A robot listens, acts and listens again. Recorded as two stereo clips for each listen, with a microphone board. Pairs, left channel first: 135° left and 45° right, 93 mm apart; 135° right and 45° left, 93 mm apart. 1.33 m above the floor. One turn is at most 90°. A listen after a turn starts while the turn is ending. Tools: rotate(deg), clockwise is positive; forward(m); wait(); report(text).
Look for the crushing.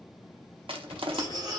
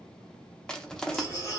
rotate(50)
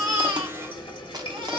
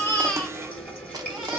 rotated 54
wait()
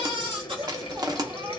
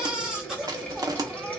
report("Found it: crushing, straight ahead.")